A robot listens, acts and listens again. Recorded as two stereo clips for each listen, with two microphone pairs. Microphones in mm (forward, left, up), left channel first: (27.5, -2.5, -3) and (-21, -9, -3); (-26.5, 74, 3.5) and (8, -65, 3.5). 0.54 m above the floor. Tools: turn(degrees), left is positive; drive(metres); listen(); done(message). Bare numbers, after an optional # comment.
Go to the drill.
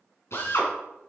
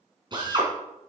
# The drill: 20° right.
turn(-20)
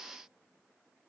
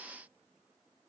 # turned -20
listen()
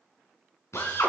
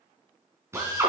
drive(1.0)
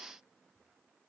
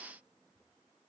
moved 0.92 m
listen()
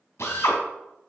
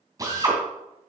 # The drill is now 10° right.
turn(-10)
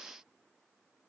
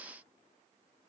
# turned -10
listen()
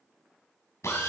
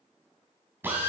drive(1.0)
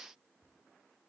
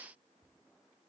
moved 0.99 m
listen()
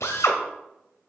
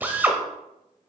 drive(1.0)
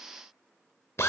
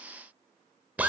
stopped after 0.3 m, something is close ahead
done("Arrived at the drill, straight ahead.")